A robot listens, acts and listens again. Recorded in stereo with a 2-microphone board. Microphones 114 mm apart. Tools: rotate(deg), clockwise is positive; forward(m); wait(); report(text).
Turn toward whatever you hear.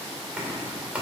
rotate(30)
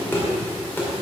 rotate(-20)
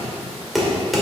report("Facing the knocking.")